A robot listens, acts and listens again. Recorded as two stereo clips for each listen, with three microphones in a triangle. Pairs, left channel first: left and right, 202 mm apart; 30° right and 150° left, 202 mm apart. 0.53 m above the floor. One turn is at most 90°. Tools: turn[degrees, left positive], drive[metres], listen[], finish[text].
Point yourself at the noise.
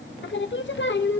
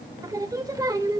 Thought: The singing: 80° left.
Action: turn[80]
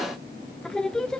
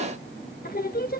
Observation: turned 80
Action: finish[Found it: singing, straight ahead.]